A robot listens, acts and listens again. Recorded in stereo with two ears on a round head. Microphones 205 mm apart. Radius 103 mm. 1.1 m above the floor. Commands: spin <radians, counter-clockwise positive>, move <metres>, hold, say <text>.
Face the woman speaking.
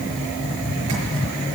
hold
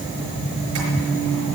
hold
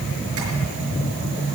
say I can't make out a woman speaking to turn to.